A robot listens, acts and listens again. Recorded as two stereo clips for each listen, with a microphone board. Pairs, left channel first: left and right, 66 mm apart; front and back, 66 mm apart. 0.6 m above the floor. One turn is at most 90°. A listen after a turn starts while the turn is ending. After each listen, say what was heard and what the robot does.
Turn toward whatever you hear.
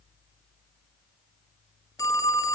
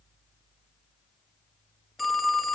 The phone ringing: 90° left. Turn 90° left.
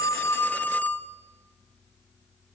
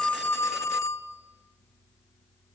The phone ringing is now 30° left. Turn 30° left.
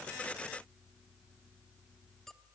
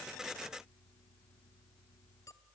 Keep listening.
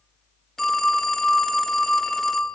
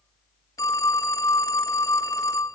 Facing the phone ringing.